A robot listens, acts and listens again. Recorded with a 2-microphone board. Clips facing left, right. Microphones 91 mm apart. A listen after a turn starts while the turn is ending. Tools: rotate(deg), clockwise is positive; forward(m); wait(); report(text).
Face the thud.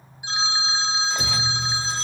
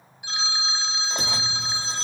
rotate(75)
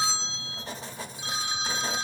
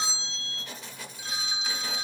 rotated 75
wait()
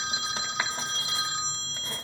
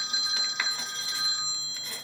report("I heard a thud, but can't make it out now. It was about straight ahead or 30° right.")